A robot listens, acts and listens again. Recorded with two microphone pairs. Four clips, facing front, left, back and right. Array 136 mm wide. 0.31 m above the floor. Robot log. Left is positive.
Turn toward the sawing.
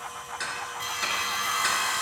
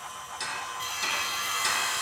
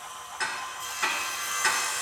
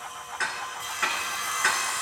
note: The sawing: 15° right.
cmd yaw -15
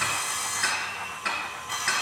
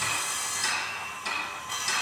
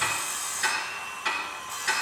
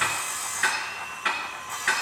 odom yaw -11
end: Facing the sawing.